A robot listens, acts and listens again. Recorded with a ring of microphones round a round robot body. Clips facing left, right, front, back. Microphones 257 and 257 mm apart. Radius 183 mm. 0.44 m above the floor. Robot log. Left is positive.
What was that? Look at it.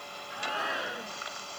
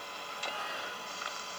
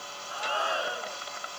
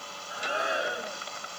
note: The shout: 110° left.
cmd yaw +110
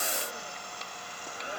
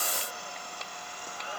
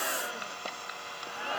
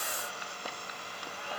note: The shout is now 15° left.
cmd yaw +15
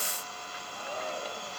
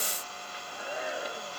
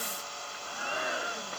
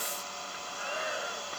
end: Found it: a shout, straight ahead.